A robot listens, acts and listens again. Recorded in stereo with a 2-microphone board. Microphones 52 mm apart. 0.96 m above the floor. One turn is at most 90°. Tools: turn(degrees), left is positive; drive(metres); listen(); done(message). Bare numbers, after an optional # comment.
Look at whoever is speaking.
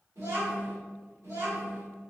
turn(-90)
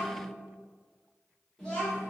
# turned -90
# So it is at 10° left.
turn(10)
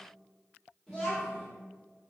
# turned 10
done("Facing the child speaking, 1 to 2 m away.")